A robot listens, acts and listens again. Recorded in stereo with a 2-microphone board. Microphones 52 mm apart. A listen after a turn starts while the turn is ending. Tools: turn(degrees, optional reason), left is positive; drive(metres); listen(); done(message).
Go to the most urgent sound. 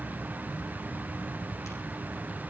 listen()
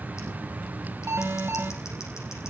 turn(degrees=-55, reason="The alarm: about 55° right or 125° right.")
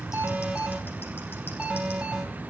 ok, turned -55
turn(degrees=-20, reason="So it is at 20° right.")
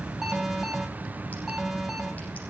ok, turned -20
drive(metres=1.0)
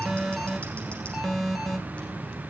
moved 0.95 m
drive(metres=1.0)
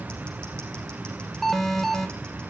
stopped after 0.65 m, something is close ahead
done("I am next to the alarm.")